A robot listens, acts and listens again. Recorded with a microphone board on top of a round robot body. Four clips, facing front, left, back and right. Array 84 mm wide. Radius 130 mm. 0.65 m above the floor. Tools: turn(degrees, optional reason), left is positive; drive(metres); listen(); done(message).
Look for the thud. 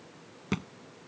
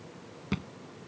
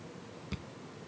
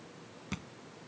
turn(degrees=15, reason="The thud: 15° left.")
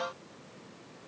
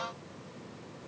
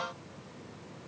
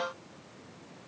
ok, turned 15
done("I heard a thud from this way, but can't make it out now.")